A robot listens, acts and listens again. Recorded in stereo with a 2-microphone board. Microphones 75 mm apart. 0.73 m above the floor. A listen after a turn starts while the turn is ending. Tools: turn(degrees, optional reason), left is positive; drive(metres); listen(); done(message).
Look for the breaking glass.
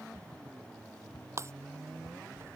turn(degrees=-40, reason="The breaking glass: about 40° right or 140° right.")
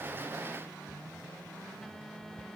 listen()
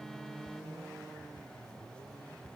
done("I heard breaking glass, but can't make it out now. It was about straight ahead or 100° right.")